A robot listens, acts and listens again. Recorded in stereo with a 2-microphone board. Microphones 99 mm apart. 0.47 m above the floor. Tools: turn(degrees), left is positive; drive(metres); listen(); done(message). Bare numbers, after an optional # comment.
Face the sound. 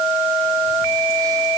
listen()
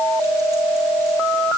listen()
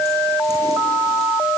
done("I can't make out anything to turn to.")